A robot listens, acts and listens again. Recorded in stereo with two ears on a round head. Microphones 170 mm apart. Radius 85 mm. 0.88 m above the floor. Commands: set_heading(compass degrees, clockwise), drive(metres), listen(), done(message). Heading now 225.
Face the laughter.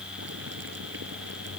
listen()
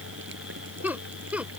set_heading(255)
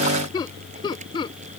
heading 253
set_heading(228)
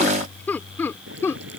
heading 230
set_heading(215)
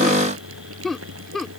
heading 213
done("Facing the laughter.")